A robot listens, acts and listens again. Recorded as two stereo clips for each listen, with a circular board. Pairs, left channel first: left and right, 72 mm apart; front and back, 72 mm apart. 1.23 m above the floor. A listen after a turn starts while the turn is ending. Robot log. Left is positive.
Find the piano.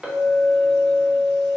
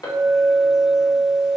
cmd idle
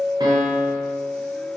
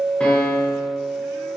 note: The piano: 75° right.
cmd yaw -75
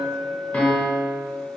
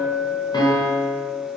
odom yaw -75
note: The piano is now 20° left.
cmd yaw +20
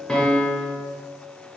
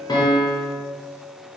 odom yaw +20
end: Facing the piano, under 1 m away.